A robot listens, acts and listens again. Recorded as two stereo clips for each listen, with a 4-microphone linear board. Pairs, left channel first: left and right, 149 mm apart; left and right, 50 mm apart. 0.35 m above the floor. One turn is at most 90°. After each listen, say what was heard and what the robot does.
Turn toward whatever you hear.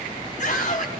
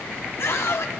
The scream: about 60° left or 120° left. Turn 60° left.
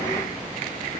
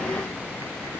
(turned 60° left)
Keep listening.
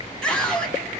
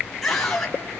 Facing the scream, 2 to 4 m away.